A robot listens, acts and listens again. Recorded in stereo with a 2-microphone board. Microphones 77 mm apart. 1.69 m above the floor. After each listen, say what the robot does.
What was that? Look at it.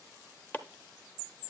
Turn 25° left.
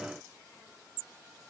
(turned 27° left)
Keep listening.
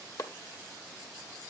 Turn 130° left.
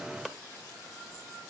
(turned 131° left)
Found it: chopping, straight ahead, under 1 m away.